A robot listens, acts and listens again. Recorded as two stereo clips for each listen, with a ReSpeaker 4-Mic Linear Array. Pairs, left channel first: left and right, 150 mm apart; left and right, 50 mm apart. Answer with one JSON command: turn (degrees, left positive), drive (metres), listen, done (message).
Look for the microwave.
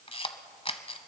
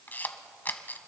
{"listen": true}
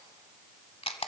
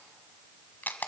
{"listen": true}
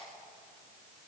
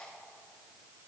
{"done": "I can't make out a microwave to turn to."}